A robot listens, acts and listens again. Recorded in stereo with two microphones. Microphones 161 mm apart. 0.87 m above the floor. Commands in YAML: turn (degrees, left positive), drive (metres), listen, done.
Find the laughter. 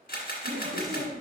turn: -75
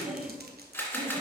turn: -25
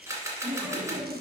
done: "Found it: laughter, straight ahead."